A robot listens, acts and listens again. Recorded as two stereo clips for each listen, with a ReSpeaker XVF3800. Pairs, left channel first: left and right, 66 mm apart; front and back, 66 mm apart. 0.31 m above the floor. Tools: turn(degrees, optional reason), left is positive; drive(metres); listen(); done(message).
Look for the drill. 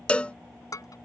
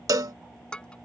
listen()
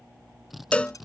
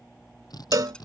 done("Found it: a drill, straight ahead.")